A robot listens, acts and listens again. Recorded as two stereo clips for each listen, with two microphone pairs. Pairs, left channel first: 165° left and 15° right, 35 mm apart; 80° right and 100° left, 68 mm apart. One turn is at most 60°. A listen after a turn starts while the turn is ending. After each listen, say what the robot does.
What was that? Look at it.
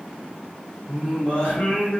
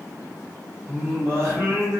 Turn 60° left.
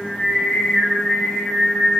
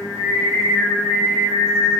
Turn 60° left.
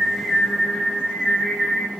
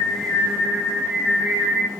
Turn 45° left.
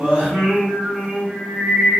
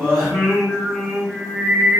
Turn 10° left.
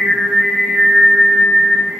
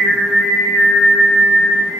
Found it: singing, straight ahead.